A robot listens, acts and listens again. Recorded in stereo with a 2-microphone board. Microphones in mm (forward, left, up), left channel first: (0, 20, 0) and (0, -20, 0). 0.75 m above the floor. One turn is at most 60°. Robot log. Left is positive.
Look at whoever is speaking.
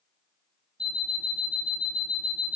cmd idle
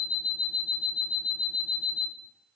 cmd idle
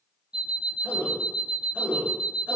note: The man speaking: about 40° right or 140° right.
cmd yaw -40
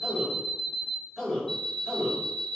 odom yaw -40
end: Facing the man speaking, over 4 m away.